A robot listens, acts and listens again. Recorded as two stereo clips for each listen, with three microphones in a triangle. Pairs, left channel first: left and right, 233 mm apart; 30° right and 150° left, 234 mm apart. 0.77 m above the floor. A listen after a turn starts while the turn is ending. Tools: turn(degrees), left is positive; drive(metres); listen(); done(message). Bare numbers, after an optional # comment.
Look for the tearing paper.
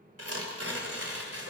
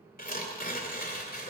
# The tearing paper: 80° right.
turn(-80)
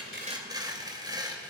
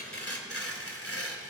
# The tearing paper is now 15° right.
turn(-15)
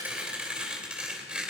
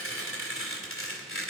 done("Found it: tearing paper, straight ahead.")